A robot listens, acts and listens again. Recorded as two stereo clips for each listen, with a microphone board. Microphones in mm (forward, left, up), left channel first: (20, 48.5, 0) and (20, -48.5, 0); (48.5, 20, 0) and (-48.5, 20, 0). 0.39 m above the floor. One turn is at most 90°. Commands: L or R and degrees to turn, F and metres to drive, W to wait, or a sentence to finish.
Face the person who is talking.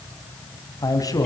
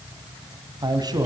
L90
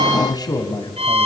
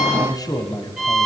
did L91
L45
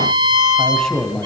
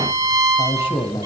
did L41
Facing the man speaking.